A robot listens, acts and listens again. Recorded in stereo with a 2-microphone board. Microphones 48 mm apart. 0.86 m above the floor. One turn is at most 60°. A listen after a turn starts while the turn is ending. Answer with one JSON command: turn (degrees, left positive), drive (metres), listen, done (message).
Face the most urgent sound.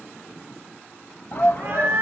{"turn": 45}
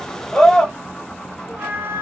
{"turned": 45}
{"turn": 10}
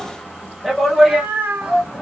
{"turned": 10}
{"done": "Found it: a shout, straight ahead."}